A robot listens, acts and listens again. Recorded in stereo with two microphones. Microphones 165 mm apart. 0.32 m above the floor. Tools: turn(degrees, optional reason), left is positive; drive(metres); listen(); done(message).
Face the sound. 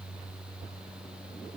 listen()
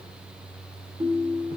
turn(degrees=-30, reason="The ringtone: about 30° right or 150° right.")
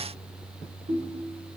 turn(degrees=-120, reason="So it is at 120° right.")
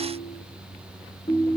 turn(degrees=25, reason="The ringtone is now 25° left.")
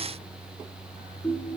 done("Found it: a ringtone, straight ahead, 2 to 4 m away.")